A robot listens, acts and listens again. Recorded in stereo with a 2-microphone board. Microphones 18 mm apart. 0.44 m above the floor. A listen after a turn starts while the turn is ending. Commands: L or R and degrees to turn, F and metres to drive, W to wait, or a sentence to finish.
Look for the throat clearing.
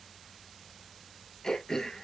L40
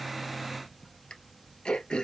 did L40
L100
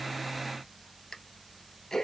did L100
L30
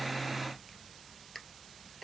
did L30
Found it: throat clearing, straight ahead.